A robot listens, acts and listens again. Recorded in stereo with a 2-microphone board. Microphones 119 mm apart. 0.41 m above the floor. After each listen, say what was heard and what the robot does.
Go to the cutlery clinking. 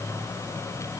Keep listening.
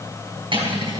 The cutlery clinking: about 45° right or 135° right. Turn 45° right.
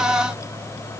Keep listening.
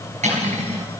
So it is at 90° right. Turn 90° right.
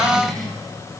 Keep listening.
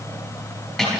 Drive 1.0 m forward.
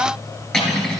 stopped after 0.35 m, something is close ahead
Blocked. The cutlery clinking is further on, straight ahead.